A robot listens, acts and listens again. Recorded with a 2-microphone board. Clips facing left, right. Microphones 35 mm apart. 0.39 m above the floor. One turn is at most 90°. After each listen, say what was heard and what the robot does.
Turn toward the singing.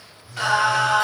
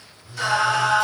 The singing: about 55° left or 125° left. Turn 55° left.
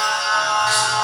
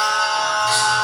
So it is at 50° left. Turn 50° left.
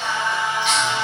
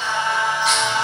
Found it: singing, straight ahead.